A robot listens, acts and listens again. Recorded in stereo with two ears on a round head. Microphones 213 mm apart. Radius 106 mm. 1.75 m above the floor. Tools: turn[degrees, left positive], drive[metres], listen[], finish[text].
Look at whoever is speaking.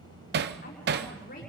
Thought: The woman speaking: about 40° left or 140° left.
Action: turn[40]
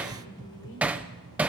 Thought: So it is at 95° left.
Action: turn[95]
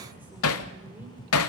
Action: listen[]
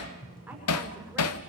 Action: listen[]
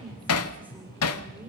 Thought: The woman speaking is now 10° right.
Action: turn[-10]
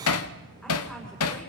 Action: listen[]
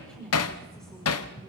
Action: finish[Facing the woman speaking.]